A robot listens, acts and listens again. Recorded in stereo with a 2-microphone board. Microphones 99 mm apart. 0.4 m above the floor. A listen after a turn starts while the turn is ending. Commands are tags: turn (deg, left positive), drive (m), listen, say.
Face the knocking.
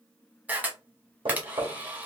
<turn deg="-60"/>
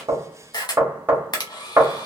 <turn deg="-25"/>
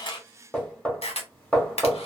<turn deg="15"/>
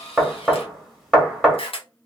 <say>Facing the knocking.</say>